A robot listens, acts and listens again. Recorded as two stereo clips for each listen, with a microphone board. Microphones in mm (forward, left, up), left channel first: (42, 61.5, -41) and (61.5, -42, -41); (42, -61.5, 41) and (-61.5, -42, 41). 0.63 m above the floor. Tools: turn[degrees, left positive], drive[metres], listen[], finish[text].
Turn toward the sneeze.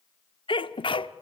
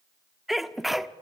Thought: The sneeze: 80° left.
Action: turn[80]
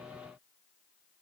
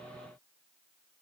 Action: finish[I heard a sneeze from this way, but can't make it out now.]